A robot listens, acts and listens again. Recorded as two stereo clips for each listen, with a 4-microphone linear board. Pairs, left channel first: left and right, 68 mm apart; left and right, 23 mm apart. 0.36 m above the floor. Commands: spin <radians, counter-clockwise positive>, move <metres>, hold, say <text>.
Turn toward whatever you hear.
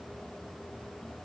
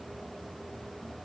hold
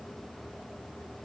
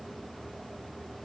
hold
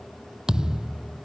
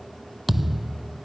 spin -0.52
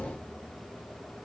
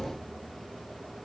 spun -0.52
hold
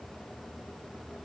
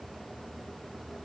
say I heard a thud, but can't make it out now. It was about 20° left or 140° right.